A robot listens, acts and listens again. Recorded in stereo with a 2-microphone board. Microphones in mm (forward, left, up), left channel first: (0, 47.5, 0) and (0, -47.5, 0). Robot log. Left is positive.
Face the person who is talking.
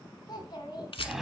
note: The child speaking: about 50° left or 130° left.
cmd yaw +50
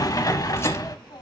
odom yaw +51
note: So it is at 70° left.
cmd yaw +70
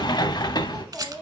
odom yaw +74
end: Facing the child speaking, 2 to 4 m away.